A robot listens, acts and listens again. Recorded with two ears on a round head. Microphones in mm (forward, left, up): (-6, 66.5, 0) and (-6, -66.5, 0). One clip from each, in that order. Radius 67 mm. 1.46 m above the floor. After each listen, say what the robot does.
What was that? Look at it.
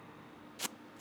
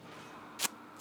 Turn 25° right.
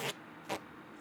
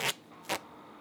Turn 130° right.
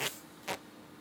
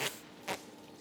Facing the tape being pulled.